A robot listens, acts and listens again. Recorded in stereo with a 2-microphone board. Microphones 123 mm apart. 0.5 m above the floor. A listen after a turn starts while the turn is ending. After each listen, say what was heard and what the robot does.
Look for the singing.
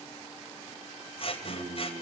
The singing: about 70° right or 110° right. Turn 70° right.
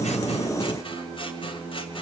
So it is at 30° right. Turn 30° right.
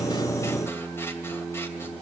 The singing is now 10° left. Turn 10° left.
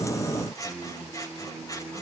Facing the singing.